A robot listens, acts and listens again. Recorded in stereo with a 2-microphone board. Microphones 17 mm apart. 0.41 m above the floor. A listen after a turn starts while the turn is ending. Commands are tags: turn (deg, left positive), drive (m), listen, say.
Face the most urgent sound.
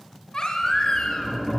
<turn deg="40"/>
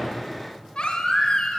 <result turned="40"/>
<turn deg="100"/>
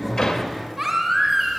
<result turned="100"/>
<turn deg="-10"/>
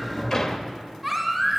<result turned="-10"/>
<say>Facing the baby crying.</say>